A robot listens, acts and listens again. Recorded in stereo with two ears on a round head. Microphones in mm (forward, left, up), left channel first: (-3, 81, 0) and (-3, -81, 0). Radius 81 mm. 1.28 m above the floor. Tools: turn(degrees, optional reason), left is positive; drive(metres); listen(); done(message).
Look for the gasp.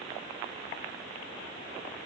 listen()
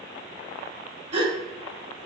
turn(degrees=-35, reason="The gasp: about 35° right or 145° right.")
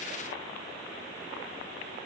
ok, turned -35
listen()
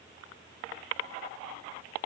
done("I heard a gasp, but can't make it out now. It was about straight ahead or 110° right.")